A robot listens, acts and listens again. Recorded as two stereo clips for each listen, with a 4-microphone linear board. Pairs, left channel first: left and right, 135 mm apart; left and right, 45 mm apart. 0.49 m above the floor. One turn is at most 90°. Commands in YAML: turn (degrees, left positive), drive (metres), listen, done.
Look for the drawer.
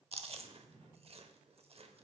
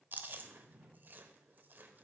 turn: -55
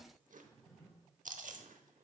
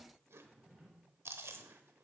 done: "Found it: a drawer, straight ahead, 2 to 4 m away."